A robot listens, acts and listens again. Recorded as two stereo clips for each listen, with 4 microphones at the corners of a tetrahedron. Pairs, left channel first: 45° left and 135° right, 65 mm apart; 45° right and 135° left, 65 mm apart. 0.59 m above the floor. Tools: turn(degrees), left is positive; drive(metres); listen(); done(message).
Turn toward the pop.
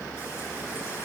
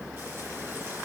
listen()
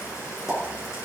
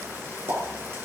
turn(degrees=145)
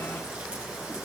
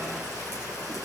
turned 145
done("I heard a pop from this way, but can't make it out now.")